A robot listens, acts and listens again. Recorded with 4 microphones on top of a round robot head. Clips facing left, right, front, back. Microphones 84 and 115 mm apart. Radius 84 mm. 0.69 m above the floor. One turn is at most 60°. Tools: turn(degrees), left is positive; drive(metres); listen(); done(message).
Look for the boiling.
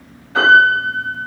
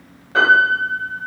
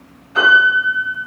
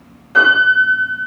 listen()
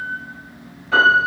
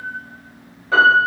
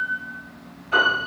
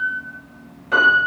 listen()
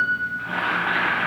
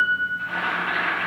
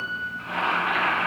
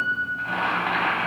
turn(degrees=60)
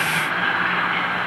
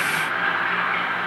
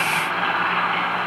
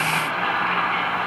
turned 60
turn(degrees=60)
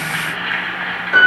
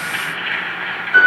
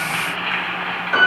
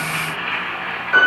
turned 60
turn(degrees=25)
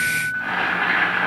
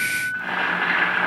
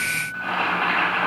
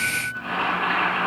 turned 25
done("Found it: boiling, straight ahead, 1 to 2 m away.")